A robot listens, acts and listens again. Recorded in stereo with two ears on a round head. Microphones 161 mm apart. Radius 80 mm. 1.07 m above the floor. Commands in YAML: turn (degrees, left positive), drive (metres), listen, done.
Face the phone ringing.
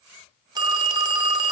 turn: -25
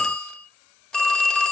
done: "Found it: a phone ringing, straight ahead."